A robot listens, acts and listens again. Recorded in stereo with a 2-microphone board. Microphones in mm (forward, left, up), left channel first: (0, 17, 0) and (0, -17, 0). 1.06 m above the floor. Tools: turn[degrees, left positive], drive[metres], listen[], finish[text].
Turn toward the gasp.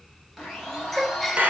Action: turn[30]
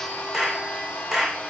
Action: listen[]
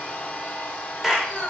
Action: finish[I heard a gasp, but can't make it out now. It was about 30° right or 150° left.]